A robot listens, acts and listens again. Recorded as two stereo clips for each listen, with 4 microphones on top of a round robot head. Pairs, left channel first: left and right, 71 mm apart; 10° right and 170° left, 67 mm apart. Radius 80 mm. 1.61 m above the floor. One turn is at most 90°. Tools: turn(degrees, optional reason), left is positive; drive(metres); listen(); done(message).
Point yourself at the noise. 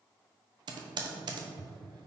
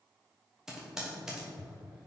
turn(degrees=-90, reason="The typing on a keyboard: 110° right.")
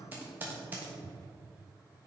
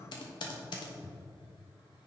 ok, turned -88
turn(degrees=-20, reason="The typing on a keyboard is now 20° right.")
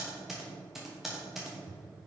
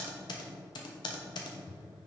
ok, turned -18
done("Found it: typing on a keyboard, straight ahead, under 1 m away.")